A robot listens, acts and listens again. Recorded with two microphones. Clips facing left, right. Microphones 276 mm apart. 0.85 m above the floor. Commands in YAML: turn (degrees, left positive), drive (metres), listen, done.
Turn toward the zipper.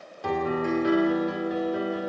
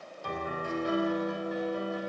listen: true
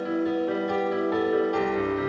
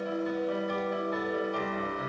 listen: true
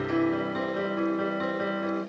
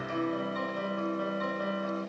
done: "I can't make out a zipper to turn to."